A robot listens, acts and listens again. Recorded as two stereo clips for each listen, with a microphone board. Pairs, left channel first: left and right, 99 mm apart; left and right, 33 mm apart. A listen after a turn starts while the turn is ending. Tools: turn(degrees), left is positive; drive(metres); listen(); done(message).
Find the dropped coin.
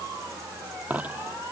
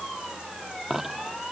turn(degrees=-30)
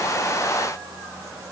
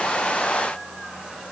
listen()
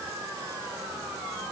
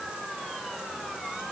done("I heard a dropped coin, but can't make it out now. It was about 15° left or 135° right.")